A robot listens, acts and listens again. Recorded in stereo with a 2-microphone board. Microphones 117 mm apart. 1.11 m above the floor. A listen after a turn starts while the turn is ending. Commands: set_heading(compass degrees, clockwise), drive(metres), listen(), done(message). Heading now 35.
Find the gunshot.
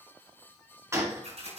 set_heading(60)
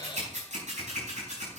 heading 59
listen()
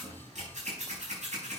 done("I heard a gunshot, but can't make it out now. It was about straight ahead or 130° right.")